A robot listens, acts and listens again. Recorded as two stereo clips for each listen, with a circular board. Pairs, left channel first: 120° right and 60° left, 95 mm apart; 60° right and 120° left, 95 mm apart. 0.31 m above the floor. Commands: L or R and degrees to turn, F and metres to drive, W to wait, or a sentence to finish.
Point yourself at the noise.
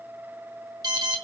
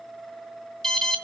L20
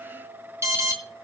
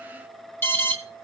Found it: an alarm, straight ahead, 2 to 4 m away.